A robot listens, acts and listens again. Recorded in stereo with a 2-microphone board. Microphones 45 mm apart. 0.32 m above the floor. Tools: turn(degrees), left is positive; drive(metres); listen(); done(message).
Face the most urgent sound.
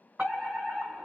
turn(degrees=-25)
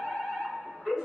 done("Facing the fire alarm.")